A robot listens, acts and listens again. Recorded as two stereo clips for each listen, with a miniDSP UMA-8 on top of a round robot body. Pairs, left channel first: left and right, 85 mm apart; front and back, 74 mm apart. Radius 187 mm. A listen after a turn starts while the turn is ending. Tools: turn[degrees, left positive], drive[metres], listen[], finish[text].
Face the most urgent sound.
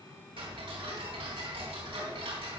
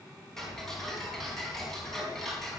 Action: listen[]
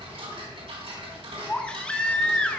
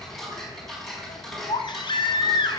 Thought: The baby crying: 10° left.
Action: turn[10]
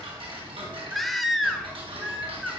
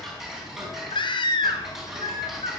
Action: finish[Found it: a baby crying, straight ahead, 1 to 2 m away.]